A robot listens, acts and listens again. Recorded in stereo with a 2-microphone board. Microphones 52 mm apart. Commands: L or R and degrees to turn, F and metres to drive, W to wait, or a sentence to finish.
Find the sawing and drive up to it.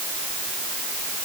W
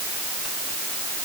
W
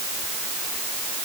I can't make out sawing to turn to.